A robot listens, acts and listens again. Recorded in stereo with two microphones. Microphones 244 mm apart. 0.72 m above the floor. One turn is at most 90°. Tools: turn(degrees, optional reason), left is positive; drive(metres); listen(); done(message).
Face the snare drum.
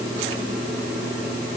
listen()
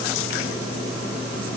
listen()
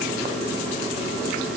done("I can't make out a snare drum to turn to.")